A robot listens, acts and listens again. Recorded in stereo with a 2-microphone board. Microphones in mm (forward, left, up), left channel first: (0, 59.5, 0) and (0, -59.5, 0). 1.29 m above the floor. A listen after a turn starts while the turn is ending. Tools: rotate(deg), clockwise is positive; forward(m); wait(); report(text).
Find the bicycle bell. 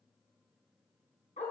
wait()
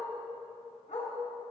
wait()
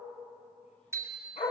rotate(20)
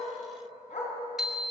report("Found it: a bicycle bell, straight ahead.")